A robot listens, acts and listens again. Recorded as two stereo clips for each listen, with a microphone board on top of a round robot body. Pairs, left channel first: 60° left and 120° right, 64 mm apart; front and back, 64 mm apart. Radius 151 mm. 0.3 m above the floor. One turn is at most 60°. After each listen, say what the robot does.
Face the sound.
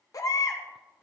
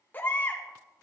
Turn 60° left.
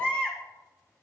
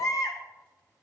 Facing the baby crying.